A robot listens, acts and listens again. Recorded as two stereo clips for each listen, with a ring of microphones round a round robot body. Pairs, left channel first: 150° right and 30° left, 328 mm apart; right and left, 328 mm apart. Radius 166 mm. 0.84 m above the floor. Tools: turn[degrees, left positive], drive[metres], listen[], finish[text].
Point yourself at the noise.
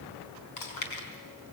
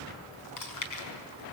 Thought: The chewing: 120° right.
Action: turn[-120]
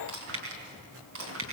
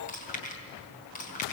Thought: The chewing is now 25° right.
Action: turn[-25]
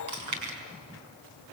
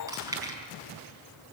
Thought: The chewing is now 10° left.
Action: turn[10]
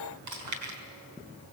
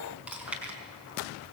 Action: finish[Facing the chewing.]